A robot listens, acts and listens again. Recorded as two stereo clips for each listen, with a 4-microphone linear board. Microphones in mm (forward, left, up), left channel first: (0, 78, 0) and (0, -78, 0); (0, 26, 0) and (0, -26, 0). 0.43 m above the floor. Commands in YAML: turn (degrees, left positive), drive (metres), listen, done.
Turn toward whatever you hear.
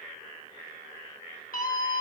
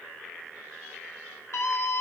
turn: 60
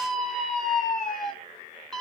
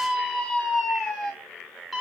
done: "Facing the scream."